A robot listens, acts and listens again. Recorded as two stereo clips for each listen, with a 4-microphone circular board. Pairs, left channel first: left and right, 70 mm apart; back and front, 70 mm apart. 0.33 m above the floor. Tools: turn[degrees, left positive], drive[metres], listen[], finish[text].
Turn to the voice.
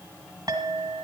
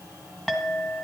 Action: listen[]
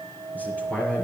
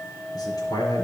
Thought: The man speaking: 160° left.
Action: turn[160]
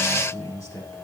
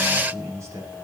Thought: The man speaking is now 45° left.
Action: turn[45]
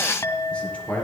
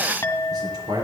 Thought: The man speaking is now 20° left.
Action: turn[20]
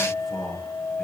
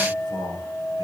Action: finish[Facing the man speaking, over 4 m away.]